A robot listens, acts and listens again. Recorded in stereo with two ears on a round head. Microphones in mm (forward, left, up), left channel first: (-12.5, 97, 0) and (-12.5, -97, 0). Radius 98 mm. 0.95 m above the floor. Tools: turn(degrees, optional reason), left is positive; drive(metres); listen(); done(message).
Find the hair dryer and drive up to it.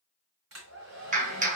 turn(degrees=-65, reason="The hair dryer: about 65° right or 115° right.")
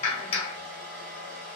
turn(degrees=-40, reason="So it is at 40° right.")
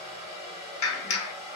drive(metres=1.0)
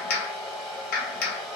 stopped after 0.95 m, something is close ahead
done("I am next to the hair dryer.")